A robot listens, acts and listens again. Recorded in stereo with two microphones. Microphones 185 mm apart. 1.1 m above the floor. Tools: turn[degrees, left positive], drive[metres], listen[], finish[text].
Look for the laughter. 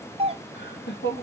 Thought: The laughter: about 70° left or 110° left.
Action: turn[70]
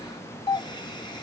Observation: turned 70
Action: listen[]
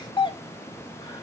Action: listen[]
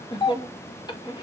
Thought: So it is at 25° left.
Action: turn[25]
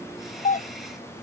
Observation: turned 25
Action: listen[]
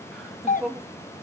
Action: finish[Facing the laughter, 1 to 2 m away.]